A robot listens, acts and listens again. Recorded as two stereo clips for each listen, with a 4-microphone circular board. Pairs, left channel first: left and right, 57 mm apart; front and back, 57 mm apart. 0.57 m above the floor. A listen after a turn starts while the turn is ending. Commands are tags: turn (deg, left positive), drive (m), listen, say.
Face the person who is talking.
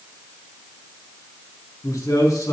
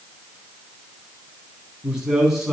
<turn deg="100"/>
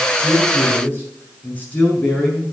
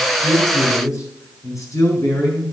<turn deg="25"/>
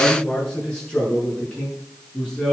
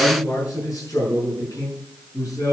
<turn deg="15"/>
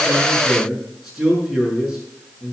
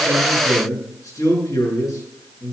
<say>Found it: a man speaking, straight ahead.</say>